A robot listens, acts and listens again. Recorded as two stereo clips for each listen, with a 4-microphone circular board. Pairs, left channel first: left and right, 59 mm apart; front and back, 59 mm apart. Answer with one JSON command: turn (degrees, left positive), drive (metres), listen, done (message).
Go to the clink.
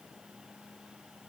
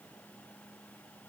{"listen": true}
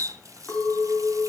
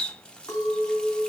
{"turn": 25}
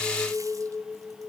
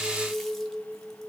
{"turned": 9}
{"turn": 20}
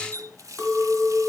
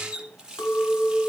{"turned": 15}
{"drive": 1.0}
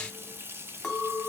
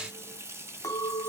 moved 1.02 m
{"drive": 1.0}
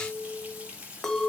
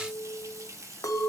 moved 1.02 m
{"drive": 1.0}
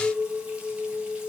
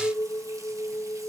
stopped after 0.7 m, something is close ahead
{"done": "I am next to the clink."}